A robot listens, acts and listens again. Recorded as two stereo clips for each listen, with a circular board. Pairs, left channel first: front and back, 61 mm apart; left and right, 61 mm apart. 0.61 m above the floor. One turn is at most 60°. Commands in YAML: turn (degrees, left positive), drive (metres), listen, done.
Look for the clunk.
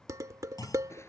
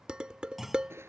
done: "Facing the clunk."